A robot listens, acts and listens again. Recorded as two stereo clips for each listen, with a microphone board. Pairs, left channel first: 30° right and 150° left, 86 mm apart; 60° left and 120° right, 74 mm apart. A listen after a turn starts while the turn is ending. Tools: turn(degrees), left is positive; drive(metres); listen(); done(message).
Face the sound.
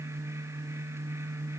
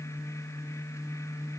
listen()
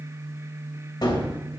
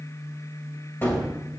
done("Facing the gunshot, 1 to 2 m away.")